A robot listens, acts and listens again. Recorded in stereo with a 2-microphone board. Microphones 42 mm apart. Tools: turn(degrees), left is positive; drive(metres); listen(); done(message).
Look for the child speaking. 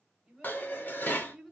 turn(degrees=-30)
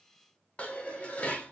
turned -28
listen()
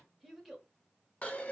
turn(degrees=30)
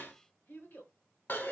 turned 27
turn(degrees=125)
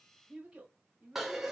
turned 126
turn(degrees=-25)
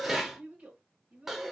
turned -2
turn(degrees=-25)
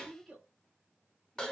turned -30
done("Facing the child speaking, 1 to 2 m away.")